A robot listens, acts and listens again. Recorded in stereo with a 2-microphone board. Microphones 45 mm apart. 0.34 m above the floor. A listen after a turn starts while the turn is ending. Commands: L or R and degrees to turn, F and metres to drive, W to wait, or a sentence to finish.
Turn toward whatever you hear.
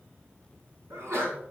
R70
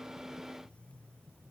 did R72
W
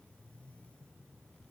I heard a sneeze, but can't make it out now. It was about straight ahead or 35° right.